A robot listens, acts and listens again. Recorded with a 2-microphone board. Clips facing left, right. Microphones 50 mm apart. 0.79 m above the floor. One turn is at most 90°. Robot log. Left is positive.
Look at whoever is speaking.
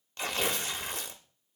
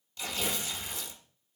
cmd idle
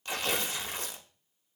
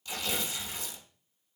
cmd idle
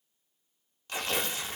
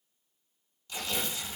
end: I can't make out anyone speaking to turn to.